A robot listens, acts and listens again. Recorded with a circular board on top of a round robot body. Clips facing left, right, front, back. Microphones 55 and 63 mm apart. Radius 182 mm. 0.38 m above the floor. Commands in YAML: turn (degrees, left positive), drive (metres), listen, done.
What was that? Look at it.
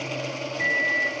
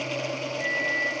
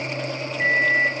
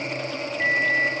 turn: 75
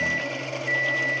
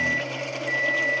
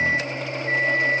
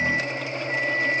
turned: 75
turn: 15
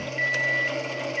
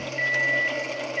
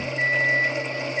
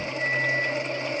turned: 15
done: "Found it: a microwave, straight ahead, 1 to 2 m away."